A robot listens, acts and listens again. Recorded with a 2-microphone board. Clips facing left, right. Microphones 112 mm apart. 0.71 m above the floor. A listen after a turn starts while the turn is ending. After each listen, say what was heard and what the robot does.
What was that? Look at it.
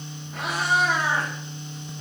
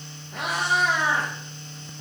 Turn 90° right.
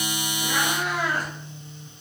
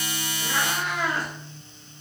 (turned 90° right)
So it is at 15° left. Turn 15° left.
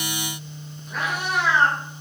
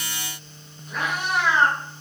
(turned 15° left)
Facing the cat meowing.